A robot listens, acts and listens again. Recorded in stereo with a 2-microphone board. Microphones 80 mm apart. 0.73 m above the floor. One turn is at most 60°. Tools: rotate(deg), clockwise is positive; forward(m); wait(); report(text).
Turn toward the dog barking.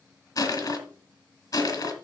wait()
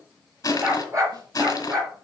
rotate(40)
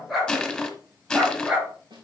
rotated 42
rotate(10)
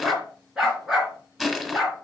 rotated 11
rotate(10)
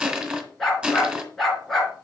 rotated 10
report("Found it: a dog barking, straight ahead.")